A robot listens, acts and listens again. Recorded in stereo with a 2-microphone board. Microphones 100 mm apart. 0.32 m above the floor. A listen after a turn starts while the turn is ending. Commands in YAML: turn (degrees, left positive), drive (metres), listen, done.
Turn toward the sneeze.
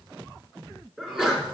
turn: -30
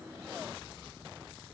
listen: true
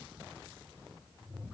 done: "I heard a sneeze, but can't make it out now. It was about 25° left or 145° right."